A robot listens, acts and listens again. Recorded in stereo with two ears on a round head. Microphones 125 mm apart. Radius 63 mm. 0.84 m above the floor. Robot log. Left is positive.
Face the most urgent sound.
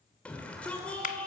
cmd yaw +30
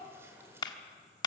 cmd idle
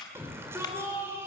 note: So it is at 20° right.
cmd yaw -20
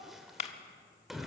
end: Found it: a shout, straight ahead.